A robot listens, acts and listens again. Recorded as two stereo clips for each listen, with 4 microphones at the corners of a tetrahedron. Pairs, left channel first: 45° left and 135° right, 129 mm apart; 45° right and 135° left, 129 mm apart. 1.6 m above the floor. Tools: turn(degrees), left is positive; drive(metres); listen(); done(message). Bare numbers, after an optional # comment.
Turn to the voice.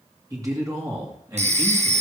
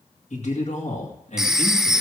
# The man speaking: 70° right.
turn(-70)
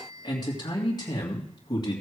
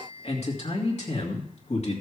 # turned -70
# The man speaking is now 15° right.
turn(-15)
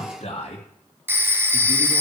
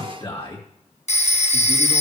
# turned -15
done("Facing the man speaking.")